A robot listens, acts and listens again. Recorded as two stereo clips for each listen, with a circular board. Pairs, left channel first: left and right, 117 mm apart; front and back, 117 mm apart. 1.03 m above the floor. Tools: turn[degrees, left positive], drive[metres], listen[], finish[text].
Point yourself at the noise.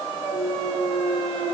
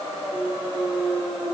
Thought: The clunk: 130° left.
Action: turn[130]
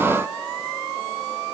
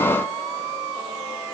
Action: finish[I heard a clunk from this way, but can't make it out now.]